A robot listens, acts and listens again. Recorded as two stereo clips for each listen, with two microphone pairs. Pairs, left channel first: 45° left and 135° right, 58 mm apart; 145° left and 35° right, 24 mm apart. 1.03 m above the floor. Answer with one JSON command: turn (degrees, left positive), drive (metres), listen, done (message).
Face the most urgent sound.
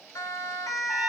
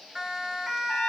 {"turn": 35}
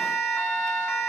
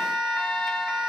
{"done": "Facing the siren."}